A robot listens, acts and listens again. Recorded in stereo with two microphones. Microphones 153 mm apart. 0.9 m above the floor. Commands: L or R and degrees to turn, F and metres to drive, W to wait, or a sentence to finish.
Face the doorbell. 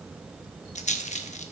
W
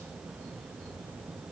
W
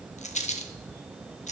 I can't make out a doorbell, only a rattle.